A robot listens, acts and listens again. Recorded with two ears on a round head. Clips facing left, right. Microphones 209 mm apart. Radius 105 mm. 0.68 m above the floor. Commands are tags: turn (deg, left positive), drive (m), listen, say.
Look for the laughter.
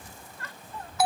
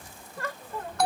<turn deg="-55"/>
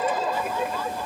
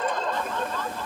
<turn deg="10"/>
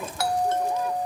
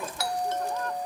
<listen/>
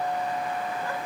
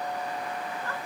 <listen/>
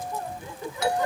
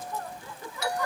<turn deg="20"/>
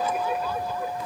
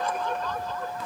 <turn deg="10"/>
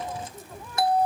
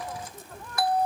<listen/>
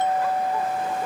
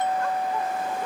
<listen/>
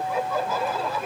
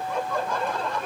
<say>Found it: laughter, straight ahead.</say>